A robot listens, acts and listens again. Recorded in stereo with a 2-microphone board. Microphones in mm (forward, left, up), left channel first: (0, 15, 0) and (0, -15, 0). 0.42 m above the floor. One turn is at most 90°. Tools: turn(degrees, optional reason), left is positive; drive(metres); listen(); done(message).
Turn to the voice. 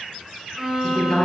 turn(degrees=25, reason="The woman speaking: about 25° left or 155° left.")
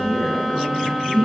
turn(degrees=90, reason="So it is at 130° left.")
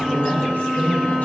turn(degrees=65, reason="The woman speaking is now 65° left.")
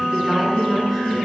done("Facing the woman speaking, over 4 m away.")